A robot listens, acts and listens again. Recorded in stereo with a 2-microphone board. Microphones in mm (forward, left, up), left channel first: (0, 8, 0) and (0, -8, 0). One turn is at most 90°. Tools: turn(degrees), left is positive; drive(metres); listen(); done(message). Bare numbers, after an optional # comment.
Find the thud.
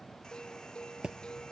# The thud: about 70° right or 110° right.
turn(-70)
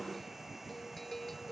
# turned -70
listen()
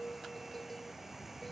done("I heard a thud, but can't make it out now. It was about straight ahead or 40° right.")